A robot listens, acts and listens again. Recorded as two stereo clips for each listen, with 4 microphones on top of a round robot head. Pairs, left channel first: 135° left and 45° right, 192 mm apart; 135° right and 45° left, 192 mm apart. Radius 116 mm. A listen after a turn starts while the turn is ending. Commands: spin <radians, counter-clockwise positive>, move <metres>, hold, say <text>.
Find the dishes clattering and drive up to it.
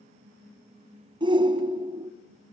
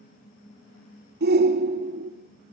hold
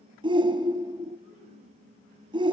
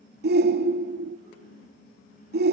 hold
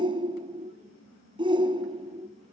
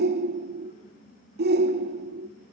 say I can't make out dishes clattering, only a shout.